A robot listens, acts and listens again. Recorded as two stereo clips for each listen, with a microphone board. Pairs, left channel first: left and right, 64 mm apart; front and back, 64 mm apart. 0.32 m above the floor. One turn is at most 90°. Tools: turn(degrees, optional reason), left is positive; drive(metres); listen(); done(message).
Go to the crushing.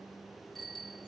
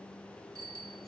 listen()
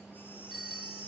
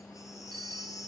listen()
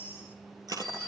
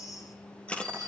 turn(degrees=-75, reason="The crushing: 75° right.")
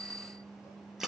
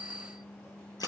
drive(metres=1.0)
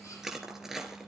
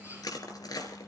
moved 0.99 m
drive(metres=1.0)
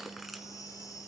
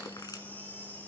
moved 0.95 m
drive(metres=1.0)
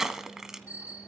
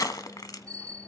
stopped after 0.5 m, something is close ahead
done("Arrived at the crushing, straight ahead.")